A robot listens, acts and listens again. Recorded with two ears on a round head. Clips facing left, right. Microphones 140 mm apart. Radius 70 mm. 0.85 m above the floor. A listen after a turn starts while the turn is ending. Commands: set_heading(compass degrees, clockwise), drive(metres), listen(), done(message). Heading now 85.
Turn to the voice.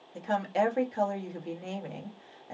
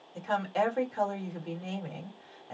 set_heading(65)
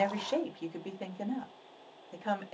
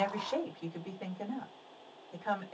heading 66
set_heading(281)
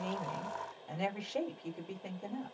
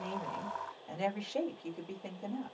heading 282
done("Facing the woman speaking.")